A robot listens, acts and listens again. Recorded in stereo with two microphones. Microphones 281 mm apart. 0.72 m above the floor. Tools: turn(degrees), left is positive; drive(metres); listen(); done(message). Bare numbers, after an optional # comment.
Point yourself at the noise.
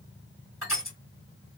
# The crushing: about 45° left or 135° left.
turn(45)
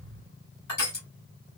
# So it is at 85° left.
turn(85)
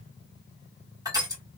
# The crushing is now 15° right.
turn(-15)
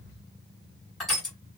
done("Facing the crushing, 1 to 2 m away.")